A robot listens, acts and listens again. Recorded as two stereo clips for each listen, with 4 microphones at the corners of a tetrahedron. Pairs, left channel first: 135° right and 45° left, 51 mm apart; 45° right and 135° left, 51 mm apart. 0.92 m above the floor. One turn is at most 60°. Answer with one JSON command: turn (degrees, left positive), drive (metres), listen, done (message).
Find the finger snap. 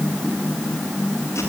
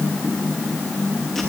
{"listen": true}
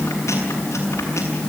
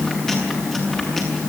{"listen": true}
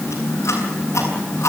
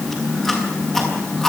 {"done": "I can't make out a finger snap, only chewing."}